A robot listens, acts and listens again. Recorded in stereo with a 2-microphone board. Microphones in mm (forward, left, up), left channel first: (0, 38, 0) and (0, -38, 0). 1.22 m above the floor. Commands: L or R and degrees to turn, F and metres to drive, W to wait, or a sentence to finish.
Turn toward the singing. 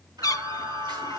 R70
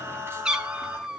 R35
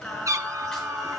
Facing the singing.